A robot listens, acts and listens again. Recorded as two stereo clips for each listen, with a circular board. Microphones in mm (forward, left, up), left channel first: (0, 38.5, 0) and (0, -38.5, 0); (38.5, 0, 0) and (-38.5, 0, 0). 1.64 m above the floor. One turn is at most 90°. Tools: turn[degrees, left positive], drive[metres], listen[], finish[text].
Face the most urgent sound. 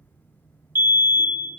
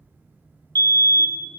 Thought: The fire alarm: 150° right.
Action: turn[-90]
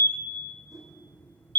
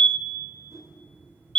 Thought: The fire alarm is now 75° right.
Action: turn[-75]
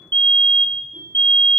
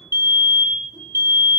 Thought: The fire alarm is now 25° left.
Action: turn[25]
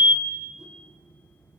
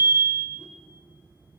Thought: The fire alarm is now 10° right.
Action: turn[-10]
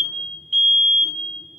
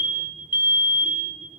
Action: finish[Found it: a fire alarm, straight ahead, 1 to 2 m away.]